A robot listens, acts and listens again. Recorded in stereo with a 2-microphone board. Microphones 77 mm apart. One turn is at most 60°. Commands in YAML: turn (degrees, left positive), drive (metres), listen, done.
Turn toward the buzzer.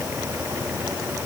listen: true
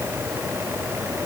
listen: true
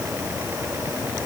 done: "I can't make out a buzzer to turn to."